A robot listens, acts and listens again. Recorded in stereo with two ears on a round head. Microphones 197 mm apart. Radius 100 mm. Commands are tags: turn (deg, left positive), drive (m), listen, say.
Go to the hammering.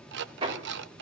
<turn deg="-30"/>
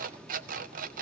<listen/>
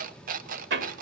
<turn deg="-120"/>
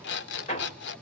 <turn deg="30"/>
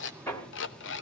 <turn deg="15"/>
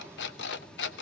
<listen/>
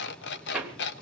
<drive m="1.0"/>
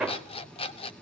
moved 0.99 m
<drive m="1.0"/>
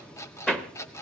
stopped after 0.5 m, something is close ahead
<say>I am next to the hammering.</say>